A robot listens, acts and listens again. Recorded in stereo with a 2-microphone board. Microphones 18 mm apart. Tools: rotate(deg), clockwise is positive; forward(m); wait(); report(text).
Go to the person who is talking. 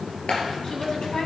rotate(-50)
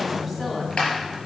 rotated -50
rotate(-10)
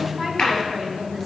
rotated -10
forward(1.0)
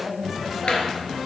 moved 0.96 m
rotate(10)
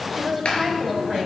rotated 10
forward(1.0)
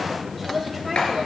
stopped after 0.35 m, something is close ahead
report("Arrived at the woman speaking, straight ahead.")